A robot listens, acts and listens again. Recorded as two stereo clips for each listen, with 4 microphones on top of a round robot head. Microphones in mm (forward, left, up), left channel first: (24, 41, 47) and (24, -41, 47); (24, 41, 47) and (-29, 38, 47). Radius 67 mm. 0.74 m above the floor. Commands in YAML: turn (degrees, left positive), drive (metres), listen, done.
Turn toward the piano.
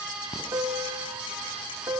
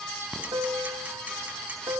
turn: -150
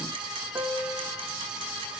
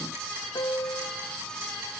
turn: -30
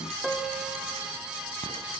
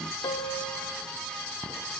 done: "Found it: a piano, straight ahead, 1 to 2 m away."